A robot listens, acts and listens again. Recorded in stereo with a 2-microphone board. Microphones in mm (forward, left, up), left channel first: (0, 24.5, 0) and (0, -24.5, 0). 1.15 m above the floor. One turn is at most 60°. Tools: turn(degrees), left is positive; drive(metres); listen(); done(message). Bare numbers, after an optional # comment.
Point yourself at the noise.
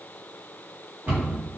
# The cupboard door: about 40° right or 140° right.
turn(-40)
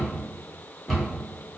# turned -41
done("Facing the cupboard door, 1 to 2 m away.")